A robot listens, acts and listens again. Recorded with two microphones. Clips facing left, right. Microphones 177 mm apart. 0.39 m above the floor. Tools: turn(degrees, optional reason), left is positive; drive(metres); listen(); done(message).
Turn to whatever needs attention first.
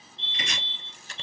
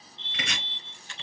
turn(degrees=-30, reason="The fire alarm: about 30° right or 150° right.")
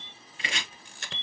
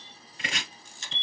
turn(degrees=-10, reason="So it is at 10° right.")
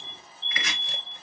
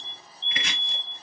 done("Facing the fire alarm.")